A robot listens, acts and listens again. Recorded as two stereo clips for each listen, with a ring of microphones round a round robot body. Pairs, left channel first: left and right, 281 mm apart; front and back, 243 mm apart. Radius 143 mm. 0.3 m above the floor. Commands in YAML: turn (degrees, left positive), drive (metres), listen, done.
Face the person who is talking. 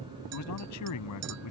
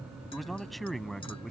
turn: 90
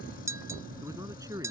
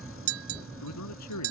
turn: -10
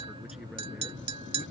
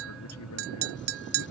listen: true
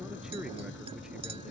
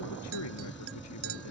listen: true
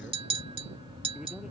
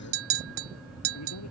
done: "I heard a man speaking from this way, but can't make it out now."